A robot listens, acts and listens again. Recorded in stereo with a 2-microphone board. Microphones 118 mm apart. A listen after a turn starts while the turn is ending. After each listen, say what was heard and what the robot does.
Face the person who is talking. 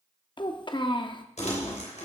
The child speaking: about 40° left or 140° left. Turn 40° left.
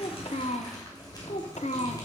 So it is at 90° left. Turn 90° left.
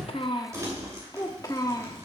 The child speaking is now 35° left. Turn 35° left.
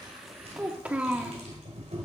The child speaking is now 10° right. Turn 10° right.
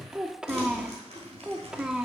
Found it: a child speaking, straight ahead.